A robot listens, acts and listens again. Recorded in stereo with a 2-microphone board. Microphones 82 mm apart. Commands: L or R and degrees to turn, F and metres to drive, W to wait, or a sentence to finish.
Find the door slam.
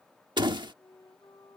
R65
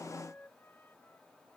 W
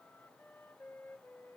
I heard a door slam, but can't make it out now. It was about straight ahead or 50° right.